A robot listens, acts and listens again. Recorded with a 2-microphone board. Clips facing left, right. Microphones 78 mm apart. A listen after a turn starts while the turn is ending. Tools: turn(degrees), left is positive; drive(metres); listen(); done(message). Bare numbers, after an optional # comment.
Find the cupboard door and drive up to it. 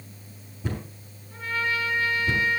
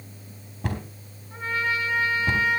# The cupboard door: about 70° right or 110° right.
turn(-70)
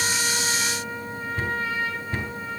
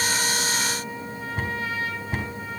# So it is at 20° right.
turn(-20)
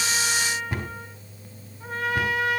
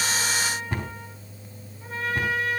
drive(1.0)
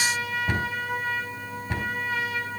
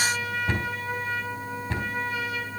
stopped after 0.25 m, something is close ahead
# The cupboard door is now 15° left.
turn(15)
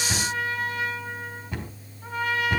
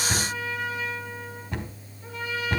done("Something is in my way. I am facing the cupboard door but have not reached it.")